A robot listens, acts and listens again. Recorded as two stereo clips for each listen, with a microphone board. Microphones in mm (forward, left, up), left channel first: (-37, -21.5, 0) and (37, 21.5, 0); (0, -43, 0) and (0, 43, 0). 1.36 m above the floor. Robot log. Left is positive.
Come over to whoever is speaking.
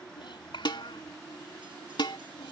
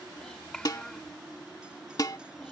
note: The child speaking: 175° right.
cmd yaw -175
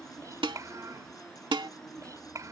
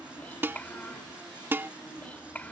note: The child speaking is now 20° right.
cmd yaw -20
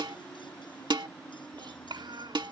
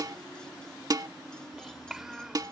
cmd fwd 1.0
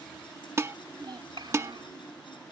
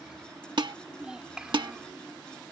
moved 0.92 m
note: The child speaking is now 10° left.
cmd yaw +10
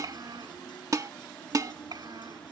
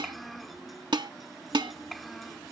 cmd fwd 1.0
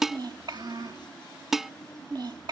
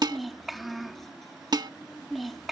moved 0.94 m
cmd fwd 1.0
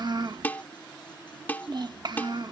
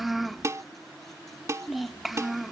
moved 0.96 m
cmd fwd 1.0
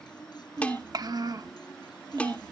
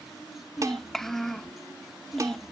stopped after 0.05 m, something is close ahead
end: I am next to the child speaking.